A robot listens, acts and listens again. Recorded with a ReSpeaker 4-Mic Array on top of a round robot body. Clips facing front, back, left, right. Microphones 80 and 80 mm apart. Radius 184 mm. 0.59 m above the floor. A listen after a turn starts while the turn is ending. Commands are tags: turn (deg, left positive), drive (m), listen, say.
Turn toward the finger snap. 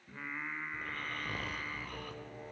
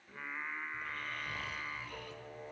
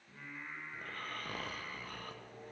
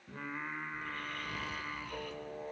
<listen/>
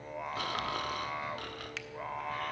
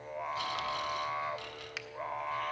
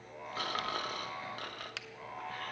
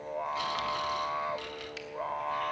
<turn deg="100"/>
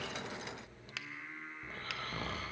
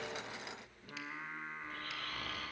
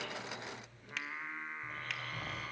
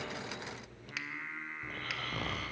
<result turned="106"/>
<say>Facing the finger snap.</say>